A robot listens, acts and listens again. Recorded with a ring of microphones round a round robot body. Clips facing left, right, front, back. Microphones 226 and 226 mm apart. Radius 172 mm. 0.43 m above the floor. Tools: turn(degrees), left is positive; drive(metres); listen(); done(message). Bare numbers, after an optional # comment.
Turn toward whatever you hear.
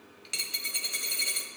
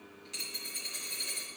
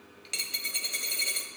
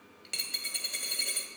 # The dropped coin: 95° left.
turn(95)
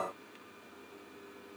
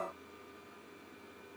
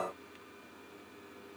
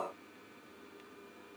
done("Facing where the dropped coin came from. I can't hear it now.")